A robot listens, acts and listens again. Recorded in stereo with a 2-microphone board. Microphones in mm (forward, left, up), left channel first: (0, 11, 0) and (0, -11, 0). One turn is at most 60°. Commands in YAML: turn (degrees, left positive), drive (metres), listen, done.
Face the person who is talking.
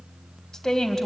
turn: 15
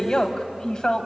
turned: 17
turn: 60
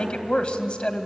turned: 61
turn: 60
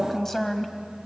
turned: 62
turn: 20
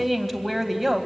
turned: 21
done: "Facing the woman speaking."